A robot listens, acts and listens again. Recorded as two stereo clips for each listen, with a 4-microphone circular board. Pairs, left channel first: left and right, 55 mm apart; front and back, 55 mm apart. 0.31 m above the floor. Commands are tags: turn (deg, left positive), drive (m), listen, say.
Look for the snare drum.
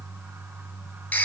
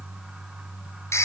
<listen/>
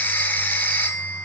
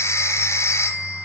<listen/>
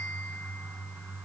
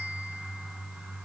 <say>I can't make out a snare drum to turn to.</say>